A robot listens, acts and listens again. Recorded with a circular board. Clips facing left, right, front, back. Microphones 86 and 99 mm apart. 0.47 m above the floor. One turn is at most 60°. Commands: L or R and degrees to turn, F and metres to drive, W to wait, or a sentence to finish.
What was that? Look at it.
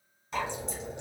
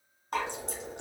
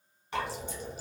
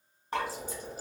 R60
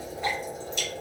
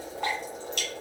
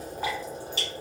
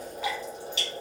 R55
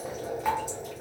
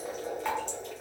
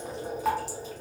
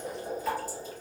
Found it: dripping, straight ahead.